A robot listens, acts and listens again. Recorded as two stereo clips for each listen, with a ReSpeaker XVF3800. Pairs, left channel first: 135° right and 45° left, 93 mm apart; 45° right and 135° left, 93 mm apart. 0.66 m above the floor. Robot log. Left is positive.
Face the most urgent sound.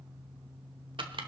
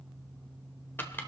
cmd idle
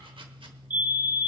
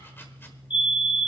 note: The fire alarm: 25° right.
cmd yaw -25
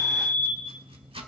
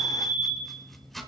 end: Facing the fire alarm.